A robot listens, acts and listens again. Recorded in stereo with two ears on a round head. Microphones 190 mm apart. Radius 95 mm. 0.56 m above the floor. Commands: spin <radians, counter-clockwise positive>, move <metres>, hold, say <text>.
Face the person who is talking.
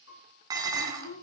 spin 1.22
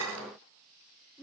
say Found it: a child speaking, straight ahead.